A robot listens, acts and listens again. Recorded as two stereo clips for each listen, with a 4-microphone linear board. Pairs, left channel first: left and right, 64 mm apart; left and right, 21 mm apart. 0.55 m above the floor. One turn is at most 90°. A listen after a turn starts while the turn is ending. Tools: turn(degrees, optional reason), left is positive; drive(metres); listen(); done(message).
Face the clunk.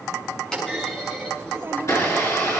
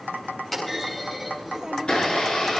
turn(degrees=30)
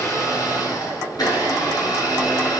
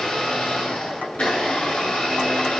listen()
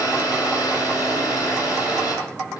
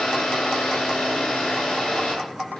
done("I heard a clunk, but can't make it out now. It was about 15° right or 135° left.")